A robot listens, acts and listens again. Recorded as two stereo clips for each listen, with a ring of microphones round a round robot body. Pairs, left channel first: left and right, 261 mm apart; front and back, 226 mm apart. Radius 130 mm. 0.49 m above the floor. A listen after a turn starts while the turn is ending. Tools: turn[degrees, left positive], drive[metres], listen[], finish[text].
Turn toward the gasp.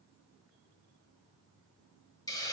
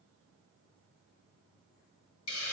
Action: listen[]
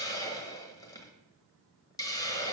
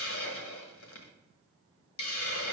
Action: listen[]
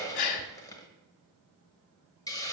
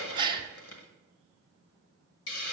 Thought: The gasp: 110° left.
Action: turn[110]
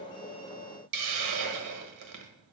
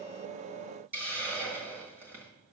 Action: finish[I heard a gasp from this way, but can't make it out now.]